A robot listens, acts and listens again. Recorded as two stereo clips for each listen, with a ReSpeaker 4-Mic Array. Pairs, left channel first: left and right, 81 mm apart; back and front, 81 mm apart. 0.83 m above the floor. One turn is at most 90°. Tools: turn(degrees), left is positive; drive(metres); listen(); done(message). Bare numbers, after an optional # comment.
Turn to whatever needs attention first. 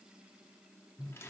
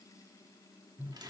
listen()
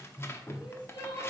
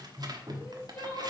# The crying: 115° left.
turn(90)
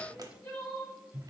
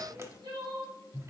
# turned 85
# The crying is now 30° left.
turn(30)
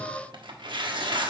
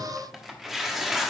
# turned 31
listen()
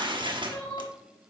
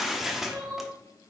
done("Found it: crying, straight ahead, 2 to 4 m away.")